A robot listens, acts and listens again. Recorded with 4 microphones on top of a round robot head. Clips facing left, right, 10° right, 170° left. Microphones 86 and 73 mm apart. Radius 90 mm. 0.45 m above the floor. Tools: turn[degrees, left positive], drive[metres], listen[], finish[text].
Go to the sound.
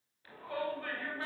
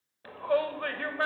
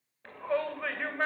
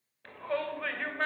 Thought: The shout: 90° right.
Action: turn[-90]
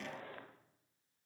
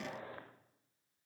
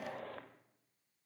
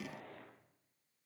Action: listen[]
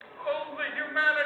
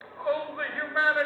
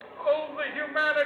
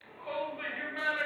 Thought: The shout is now 20° right.
Action: turn[-20]
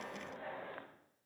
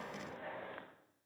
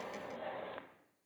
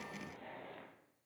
Action: drive[1.0]
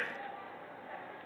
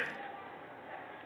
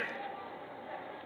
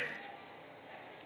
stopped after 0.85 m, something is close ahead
Action: finish[I am next to the shout.]